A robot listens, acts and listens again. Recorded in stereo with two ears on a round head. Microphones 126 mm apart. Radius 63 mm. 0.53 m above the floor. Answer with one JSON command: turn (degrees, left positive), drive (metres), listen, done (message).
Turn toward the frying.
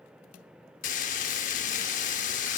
{"turn": 60}
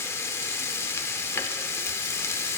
{"turn": 20}
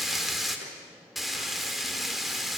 {"done": "Facing the frying, under 1 m away."}